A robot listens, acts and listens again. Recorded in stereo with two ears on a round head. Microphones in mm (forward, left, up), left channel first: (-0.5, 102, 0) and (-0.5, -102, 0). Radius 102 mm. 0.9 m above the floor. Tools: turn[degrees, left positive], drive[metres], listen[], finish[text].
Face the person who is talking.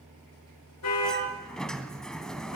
Action: listen[]
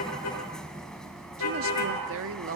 Thought: The woman speaking: about 60° right or 120° right.
Action: turn[-60]
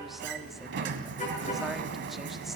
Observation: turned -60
Action: listen[]
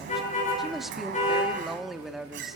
Action: finish[Facing the woman speaking, 1 to 2 m away.]